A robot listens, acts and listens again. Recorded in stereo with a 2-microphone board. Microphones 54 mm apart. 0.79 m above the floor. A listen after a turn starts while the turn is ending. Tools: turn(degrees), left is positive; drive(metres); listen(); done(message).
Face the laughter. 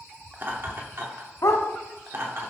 turn(degrees=-55)
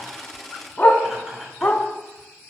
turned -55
turn(degrees=-10)
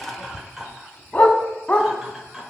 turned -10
turn(degrees=-10)
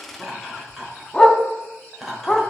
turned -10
done("Found it: laughter, straight ahead.")